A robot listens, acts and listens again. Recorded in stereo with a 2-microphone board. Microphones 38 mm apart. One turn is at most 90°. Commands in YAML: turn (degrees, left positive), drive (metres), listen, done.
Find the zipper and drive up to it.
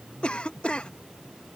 listen: true
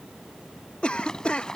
turn: 15
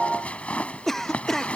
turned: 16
turn: 90
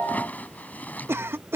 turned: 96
turn: 50
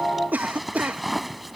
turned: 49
drive: 1.0
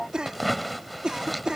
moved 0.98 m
drive: 1.0
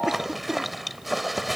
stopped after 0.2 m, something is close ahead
done: "I am next to the zipper."